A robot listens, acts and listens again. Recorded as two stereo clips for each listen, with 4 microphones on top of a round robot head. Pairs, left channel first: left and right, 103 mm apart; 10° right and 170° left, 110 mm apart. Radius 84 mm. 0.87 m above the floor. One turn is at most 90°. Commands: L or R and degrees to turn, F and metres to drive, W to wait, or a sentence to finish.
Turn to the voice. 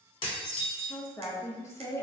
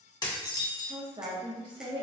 L90
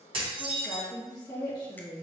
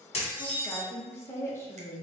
L55
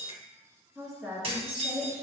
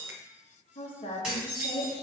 Found it: a woman speaking, straight ahead, 1 to 2 m away.